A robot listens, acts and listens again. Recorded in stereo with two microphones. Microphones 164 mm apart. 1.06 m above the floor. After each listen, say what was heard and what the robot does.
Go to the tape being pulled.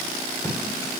The tape being pulled: about 20° left or 160° left. Turn 20° left.
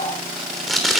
Drive 1.0 m forward.
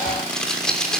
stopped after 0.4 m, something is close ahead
Something is in my way. I am facing the tape being pulled but have not reached it.